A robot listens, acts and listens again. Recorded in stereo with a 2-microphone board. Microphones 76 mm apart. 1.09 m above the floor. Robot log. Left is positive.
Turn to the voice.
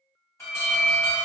cmd idle
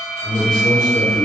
note: The man speaking: about 60° left or 120° left.
cmd yaw +60
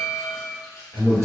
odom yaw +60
note: So it is at 45° left.
cmd yaw +45
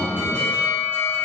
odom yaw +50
end: Found it: a man speaking, straight ahead, 1 to 2 m away.